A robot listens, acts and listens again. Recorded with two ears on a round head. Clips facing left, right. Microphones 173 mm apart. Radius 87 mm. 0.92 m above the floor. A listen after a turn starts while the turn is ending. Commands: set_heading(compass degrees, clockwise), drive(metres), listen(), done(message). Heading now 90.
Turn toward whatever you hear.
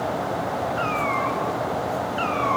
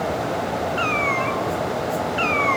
set_heading(115)
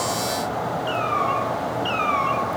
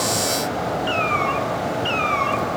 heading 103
set_heading(123)
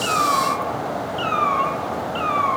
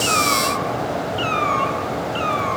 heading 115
set_heading(135)
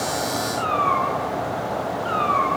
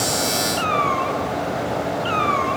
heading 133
set_heading(168)
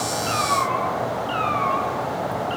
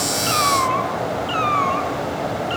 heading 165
set_heading(280)
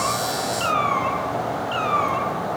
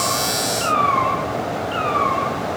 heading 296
set_heading(276)
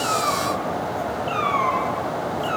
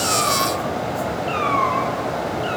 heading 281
done("Facing the cat meowing.")